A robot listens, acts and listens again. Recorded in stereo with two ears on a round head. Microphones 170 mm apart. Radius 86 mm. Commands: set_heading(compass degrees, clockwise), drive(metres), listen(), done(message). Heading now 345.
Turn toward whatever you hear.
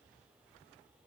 listen()
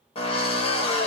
set_heading(315)
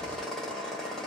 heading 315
done("Found it: a drill, straight ahead.")